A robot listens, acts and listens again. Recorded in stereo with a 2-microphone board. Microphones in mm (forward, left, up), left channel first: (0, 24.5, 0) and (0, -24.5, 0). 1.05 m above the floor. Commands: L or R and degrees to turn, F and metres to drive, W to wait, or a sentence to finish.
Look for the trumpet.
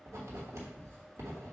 W
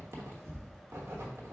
W
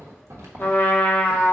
L35
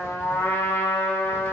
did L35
L115
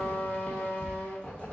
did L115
L35
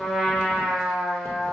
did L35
L10
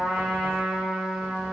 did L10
Facing the trumpet.